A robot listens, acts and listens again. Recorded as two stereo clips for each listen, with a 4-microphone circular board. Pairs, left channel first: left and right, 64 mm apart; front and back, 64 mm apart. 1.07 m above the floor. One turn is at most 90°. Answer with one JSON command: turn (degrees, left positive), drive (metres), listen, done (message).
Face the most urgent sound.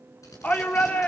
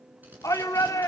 {"turn": 25}
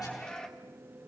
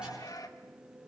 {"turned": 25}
{"turn": 10}
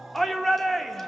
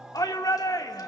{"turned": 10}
{"done": "Found it: a shout, straight ahead."}